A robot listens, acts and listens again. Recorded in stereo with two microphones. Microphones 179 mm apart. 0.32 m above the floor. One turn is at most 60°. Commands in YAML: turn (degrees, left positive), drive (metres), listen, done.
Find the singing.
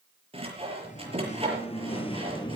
turn: 25
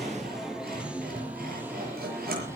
turn: -15
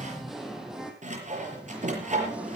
done: "Facing the singing."